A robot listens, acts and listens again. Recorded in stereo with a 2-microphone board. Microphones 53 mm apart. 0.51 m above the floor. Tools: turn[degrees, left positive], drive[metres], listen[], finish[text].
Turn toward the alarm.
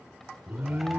Thought: The alarm: about 35° right or 145° right.
Action: turn[-35]
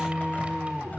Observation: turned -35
Thought: So it is at 10° right.
Action: turn[-10]
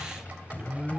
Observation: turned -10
Action: finish[Found it: an alarm, straight ahead.]